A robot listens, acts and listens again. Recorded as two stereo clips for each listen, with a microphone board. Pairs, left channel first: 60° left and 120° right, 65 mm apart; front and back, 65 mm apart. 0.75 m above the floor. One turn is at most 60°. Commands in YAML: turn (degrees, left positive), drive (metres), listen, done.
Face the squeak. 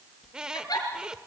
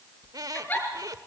turn: 60
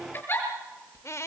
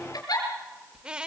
turn: 60
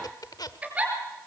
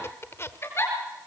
turn: 50
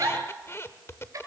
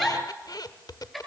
turn: 10
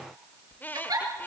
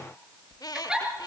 done: "Facing the squeak."